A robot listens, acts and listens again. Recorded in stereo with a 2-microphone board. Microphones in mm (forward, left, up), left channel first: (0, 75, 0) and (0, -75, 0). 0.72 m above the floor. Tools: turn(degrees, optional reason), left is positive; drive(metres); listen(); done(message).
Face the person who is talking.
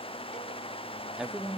turn(degrees=-30)
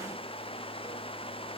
listen()
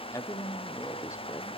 turn(degrees=25, reason="So it is at 25° left.")
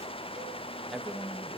done("Facing the woman speaking, under 1 m away.")